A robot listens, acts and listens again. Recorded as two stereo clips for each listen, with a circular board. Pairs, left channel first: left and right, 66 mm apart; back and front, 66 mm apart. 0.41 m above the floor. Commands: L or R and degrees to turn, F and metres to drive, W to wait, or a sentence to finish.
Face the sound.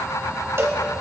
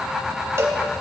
R45
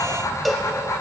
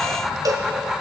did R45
Facing the cowbell.